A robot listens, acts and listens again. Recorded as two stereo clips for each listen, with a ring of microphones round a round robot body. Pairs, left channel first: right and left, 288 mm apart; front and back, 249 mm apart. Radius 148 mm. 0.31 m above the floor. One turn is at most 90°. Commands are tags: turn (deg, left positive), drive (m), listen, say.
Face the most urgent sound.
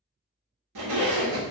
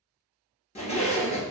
<listen/>
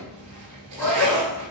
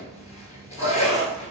<turn deg="10"/>
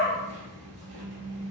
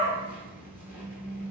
<say>Facing the shout, 1 to 2 m away.</say>